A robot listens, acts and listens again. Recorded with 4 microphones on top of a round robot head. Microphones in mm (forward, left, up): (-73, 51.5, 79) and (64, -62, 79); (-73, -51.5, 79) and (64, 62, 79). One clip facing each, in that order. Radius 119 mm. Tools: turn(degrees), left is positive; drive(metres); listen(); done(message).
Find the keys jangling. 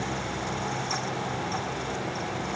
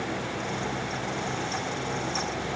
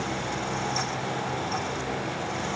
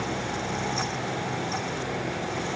listen()
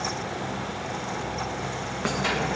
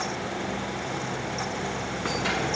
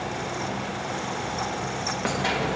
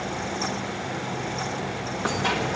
turn(degrees=145)
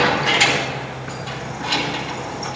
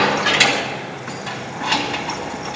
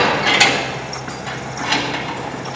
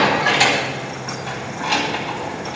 turn(degrees=-55)
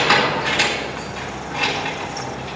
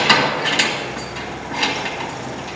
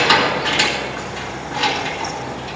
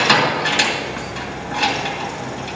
done("Found it: keys jangling, straight ahead.")